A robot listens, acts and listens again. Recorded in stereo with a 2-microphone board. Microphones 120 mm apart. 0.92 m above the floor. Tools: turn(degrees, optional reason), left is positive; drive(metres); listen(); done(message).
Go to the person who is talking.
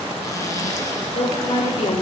turn(degrees=50, reason="The woman speaking: about 50° left or 130° left.")
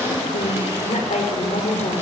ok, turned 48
turn(degrees=80, reason="So it is at 80° left.")
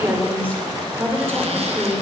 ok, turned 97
turn(degrees=-15, reason="The woman speaking is now 15° right.")
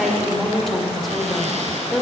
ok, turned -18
drive(metres=1.0)
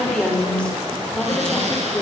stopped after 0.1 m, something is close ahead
turn(degrees=10, reason="The woman speaking is now 10° left.")
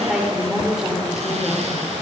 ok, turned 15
done("Something is in my way. I am facing the woman speaking but have not reached it.")